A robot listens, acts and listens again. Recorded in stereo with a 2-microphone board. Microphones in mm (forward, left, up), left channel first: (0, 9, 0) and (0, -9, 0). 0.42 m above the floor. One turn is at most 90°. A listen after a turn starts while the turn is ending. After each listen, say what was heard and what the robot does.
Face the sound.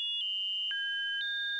Keep listening.
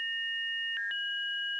Keep listening.
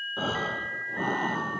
Turn 30° left.
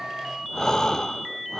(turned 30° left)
So it is at 150° left. Turn 90° left.
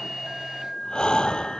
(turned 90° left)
The breathing is now 55° left. Turn 55° left.
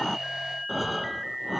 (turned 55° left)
Found it: breathing, straight ahead.